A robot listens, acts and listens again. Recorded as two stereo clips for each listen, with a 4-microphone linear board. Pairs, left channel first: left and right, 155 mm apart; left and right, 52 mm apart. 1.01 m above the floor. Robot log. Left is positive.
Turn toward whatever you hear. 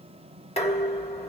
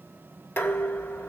note: The dishes clattering: about 40° left or 140° left.
cmd yaw +40
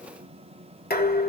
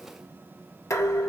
note: So it is at 95° left.
cmd yaw +95
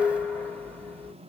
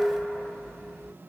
note: The dishes clattering is now 15° left.
cmd yaw +15
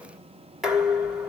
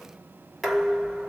end: Found it: dishes clattering, straight ahead, 1 to 2 m away.